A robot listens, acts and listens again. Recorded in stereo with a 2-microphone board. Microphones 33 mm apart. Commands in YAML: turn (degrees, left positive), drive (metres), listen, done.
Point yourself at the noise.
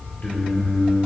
turn: 55
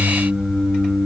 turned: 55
turn: 75
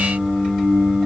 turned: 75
turn: 25
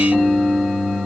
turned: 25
turn: 15
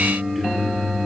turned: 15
turn: 10
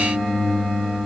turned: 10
done: "Facing the singing, 1 to 2 m away."